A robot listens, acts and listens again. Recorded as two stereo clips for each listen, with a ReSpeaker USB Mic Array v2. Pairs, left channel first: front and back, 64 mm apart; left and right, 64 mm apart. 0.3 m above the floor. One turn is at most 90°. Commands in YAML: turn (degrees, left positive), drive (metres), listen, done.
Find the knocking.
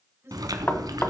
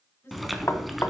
turn: 60
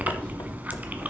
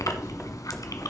listen: true
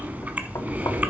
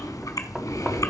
listen: true
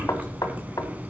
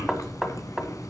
turn: -10
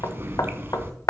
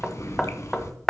done: "Facing the knocking, 1 to 2 m away."